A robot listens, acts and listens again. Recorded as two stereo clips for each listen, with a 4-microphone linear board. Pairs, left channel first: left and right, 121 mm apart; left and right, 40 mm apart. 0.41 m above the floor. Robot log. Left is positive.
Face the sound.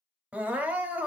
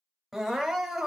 cmd yaw -30
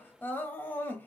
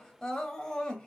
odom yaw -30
note: So it is at 15° left.
cmd yaw +15
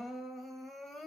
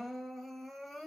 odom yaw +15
end: Found it: crying, straight ahead, under 1 m away.